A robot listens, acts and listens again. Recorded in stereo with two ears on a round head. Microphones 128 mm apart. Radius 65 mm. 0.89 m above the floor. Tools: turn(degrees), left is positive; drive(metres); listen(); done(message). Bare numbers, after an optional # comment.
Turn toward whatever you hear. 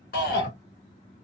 turn(90)
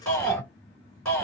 done("Facing the shout.")